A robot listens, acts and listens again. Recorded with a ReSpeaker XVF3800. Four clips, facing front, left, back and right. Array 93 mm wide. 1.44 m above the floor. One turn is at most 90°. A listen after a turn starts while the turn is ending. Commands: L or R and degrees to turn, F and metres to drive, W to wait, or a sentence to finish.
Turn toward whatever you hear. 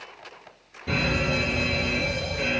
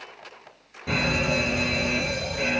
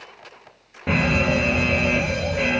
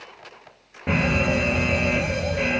R90
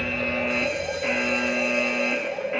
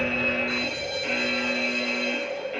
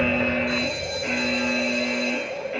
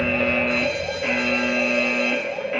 R60
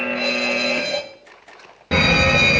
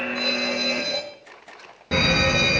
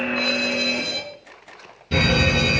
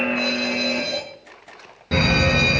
Facing the fire alarm.